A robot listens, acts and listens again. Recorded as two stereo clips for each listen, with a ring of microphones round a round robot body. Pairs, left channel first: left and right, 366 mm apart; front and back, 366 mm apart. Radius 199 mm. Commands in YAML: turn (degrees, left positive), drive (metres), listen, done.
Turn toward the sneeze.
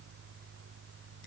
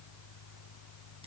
listen: true
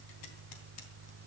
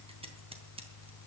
listen: true
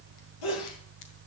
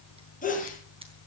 turn: 70
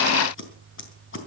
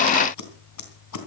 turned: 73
done: "Facing where the sneeze came from. I can't hear it now."